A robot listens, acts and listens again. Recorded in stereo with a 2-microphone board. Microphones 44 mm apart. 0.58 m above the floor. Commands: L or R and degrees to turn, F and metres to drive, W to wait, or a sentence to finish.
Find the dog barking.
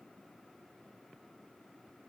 W
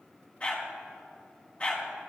L30
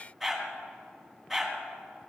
Facing the dog barking, 1 to 2 m away.